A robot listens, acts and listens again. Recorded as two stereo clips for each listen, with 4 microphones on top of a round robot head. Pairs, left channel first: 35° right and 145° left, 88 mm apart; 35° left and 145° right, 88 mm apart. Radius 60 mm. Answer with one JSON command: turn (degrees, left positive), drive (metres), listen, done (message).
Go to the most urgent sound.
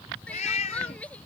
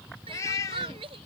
{"turn": -110}
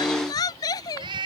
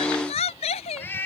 {"turn": 15}
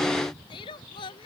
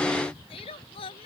{"drive": 1.0}
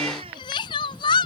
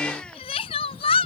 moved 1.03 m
{"drive": 1.0}
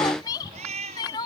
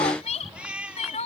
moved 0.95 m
{"turn": 15}
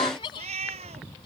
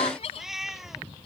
{"drive": 1.0}
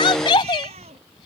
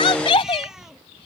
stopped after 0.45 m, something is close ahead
{"done": "Arrived at the crying, straight ahead."}